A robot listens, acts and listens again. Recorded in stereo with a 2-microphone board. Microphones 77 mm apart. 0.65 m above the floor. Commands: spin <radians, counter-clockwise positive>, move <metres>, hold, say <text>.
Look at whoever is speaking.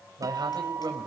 spin -1.13
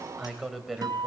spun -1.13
say Found it: a man speaking, straight ahead, 2 to 4 m away.